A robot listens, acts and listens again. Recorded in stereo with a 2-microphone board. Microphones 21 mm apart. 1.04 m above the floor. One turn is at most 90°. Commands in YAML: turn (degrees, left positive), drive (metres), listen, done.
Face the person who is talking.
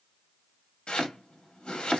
listen: true
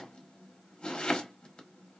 listen: true
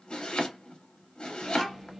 turn: -15
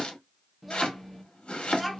done: "Found it: a child speaking, straight ahead."